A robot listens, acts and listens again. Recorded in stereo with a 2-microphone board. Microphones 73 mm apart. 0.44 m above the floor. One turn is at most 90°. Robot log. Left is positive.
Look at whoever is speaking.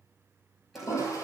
cmd idle
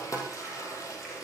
cmd idle
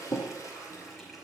end: I can't make out anyone speaking, only a toilet flushing and a running tap.